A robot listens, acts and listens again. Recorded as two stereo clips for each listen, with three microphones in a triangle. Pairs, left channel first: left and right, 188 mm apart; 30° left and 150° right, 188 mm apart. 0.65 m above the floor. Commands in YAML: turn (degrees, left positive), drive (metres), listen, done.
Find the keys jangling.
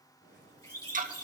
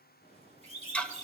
turn: 85
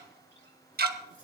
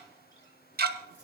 listen: true
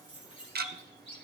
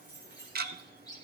turn: 35
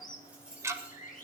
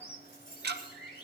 done: "Facing the keys jangling, over 4 m away."